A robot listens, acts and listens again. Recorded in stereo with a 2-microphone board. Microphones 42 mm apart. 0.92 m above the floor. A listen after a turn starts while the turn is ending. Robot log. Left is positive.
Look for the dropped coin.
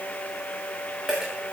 cmd yaw -30
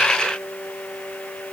cmd idle
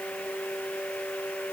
end: I heard a dropped coin, but can't make it out now. It was about 15° left or 135° right.